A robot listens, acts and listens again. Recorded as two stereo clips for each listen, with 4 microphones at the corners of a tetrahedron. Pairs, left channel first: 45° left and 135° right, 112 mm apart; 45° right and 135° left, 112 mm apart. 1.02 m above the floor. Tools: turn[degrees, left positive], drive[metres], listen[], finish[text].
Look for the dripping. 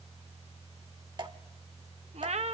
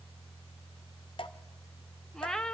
Thought: The dripping: 85° right.
Action: turn[-85]
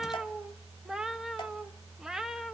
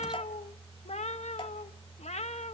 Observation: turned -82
Action: listen[]
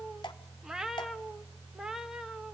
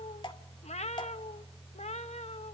Action: finish[Facing the dripping.]